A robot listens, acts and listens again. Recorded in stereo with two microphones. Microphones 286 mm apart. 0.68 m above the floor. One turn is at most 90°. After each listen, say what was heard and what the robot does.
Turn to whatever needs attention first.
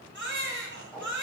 The baby crying: about 40° right or 140° right. Turn 40° right.
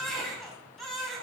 Facing the baby crying.